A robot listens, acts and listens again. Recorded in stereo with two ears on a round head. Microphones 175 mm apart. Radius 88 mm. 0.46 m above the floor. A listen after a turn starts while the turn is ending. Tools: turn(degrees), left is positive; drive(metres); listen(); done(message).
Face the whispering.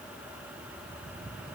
listen()
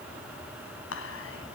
turn(degrees=75)
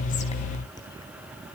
listen()
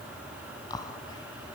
turn(degrees=20)
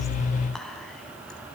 done("Found it: whispering, straight ahead, 2 to 4 m away.")